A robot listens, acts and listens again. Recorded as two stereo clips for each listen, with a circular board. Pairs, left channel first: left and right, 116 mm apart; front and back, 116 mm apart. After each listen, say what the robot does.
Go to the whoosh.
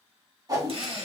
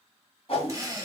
Turn 35° right.
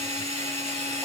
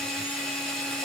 Keep listening.
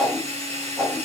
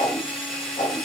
Drive 1.0 m forward.
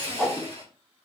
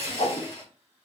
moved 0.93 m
Drive 1.0 m forward.
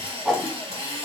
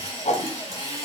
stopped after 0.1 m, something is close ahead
Turn 10° right.
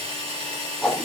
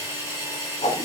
Arrived at the whoosh, straight ahead.